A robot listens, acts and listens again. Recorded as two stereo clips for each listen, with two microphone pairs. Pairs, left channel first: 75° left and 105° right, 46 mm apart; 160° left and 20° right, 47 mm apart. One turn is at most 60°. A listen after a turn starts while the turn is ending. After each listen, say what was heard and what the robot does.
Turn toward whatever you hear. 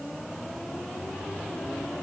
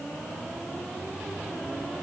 Keep listening.
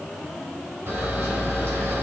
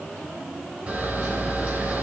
The camera shutter: 80° right. Turn 60° right.
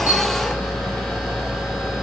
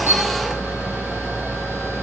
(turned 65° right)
The camera shutter is now 15° right. Turn 15° right.
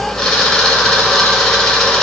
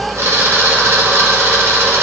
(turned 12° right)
Found it: a camera shutter, straight ahead, 2 to 4 m away.